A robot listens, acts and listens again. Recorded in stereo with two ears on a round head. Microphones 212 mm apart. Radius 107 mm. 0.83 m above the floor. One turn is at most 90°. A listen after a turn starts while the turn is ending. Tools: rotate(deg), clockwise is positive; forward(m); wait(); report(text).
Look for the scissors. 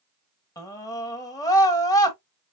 wait()
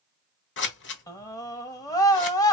rotate(-55)
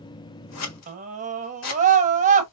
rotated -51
rotate(-75)
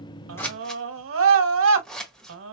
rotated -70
report("Facing the scissors, 1 to 2 m away.")